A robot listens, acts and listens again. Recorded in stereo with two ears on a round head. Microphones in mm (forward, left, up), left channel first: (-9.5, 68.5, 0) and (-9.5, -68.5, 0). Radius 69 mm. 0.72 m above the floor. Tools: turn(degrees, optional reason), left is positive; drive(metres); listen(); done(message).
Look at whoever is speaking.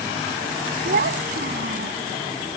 turn(degrees=-65, reason="The child speaking: about 65° right or 115° right.")
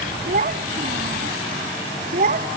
turn(degrees=-50, reason="So it is at 50° right.")
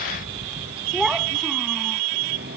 listen()
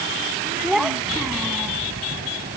done("Found it: a child speaking, straight ahead.")